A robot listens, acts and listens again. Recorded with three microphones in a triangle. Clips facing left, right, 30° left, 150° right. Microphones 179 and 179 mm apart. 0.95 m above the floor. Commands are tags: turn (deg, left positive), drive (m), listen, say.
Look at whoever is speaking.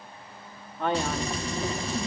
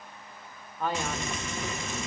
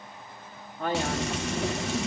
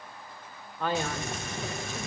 <turn deg="70"/>
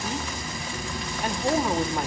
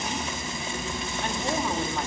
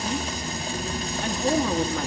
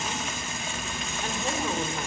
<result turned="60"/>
<turn deg="10"/>
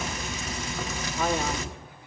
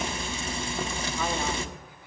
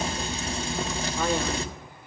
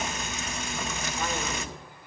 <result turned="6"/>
<listen/>
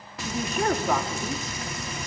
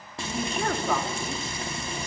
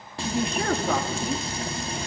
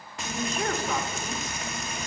<say>Found it: a man speaking, straight ahead.</say>